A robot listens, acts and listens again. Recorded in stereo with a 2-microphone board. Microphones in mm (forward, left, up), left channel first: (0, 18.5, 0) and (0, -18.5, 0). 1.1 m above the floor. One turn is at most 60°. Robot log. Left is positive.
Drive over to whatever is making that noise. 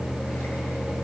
cmd idle
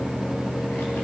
cmd idle
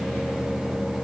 end: I can't make out anything.